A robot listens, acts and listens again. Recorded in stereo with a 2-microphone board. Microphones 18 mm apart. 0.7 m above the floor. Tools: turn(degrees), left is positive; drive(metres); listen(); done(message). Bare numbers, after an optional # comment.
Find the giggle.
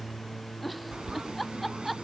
turn(30)
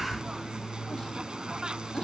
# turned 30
listen()
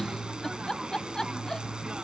# So it is at 150° left.
turn(150)
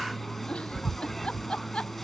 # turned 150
# The giggle is now 80° left.
turn(80)
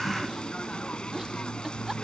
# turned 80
listen()
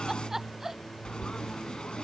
# The giggle is now 20° right.
turn(-20)
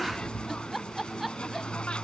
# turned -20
done("Facing the giggle.")